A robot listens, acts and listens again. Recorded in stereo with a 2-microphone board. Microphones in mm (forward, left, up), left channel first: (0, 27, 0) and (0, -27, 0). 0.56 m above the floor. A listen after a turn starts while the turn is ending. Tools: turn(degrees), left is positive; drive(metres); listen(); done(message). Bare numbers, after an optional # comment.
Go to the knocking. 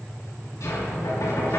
turn(90)
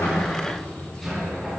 drive(1.0)
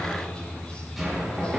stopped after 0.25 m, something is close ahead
done("Blocked. The knocking is further on, straight ahead.")